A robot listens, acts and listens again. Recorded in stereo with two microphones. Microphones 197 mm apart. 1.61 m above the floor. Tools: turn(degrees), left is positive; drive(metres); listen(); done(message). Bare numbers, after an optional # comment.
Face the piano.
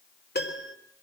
# The piano: about 60° left or 120° left.
turn(60)
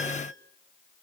listen()
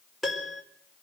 done("Found it: a piano, straight ahead.")